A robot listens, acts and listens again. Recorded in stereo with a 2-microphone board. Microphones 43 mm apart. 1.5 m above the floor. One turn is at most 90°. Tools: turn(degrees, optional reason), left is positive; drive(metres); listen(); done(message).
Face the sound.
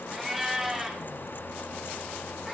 turn(degrees=-30)
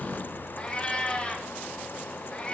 turn(degrees=25, reason="So it is at 25° left.")
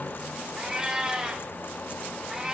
turn(degrees=-15, reason="The cat meowing is now 15° right.")
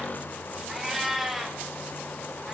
done("Facing the cat meowing, 2 to 4 m away.")